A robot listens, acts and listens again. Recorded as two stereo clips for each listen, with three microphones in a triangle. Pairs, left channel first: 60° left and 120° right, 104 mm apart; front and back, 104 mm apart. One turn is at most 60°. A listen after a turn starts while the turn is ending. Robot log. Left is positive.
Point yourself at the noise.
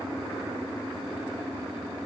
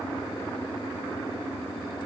cmd idle
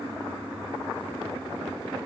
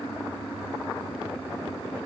cmd idle
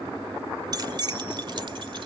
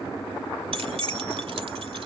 note: The keys jangling: 165° right.
cmd yaw -60
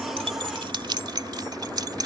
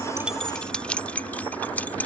note: The keys jangling is now 75° right.
cmd yaw -60
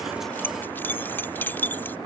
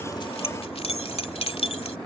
note: The keys jangling is now 10° right.
cmd yaw -10
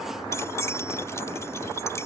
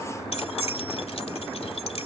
end: Facing the keys jangling.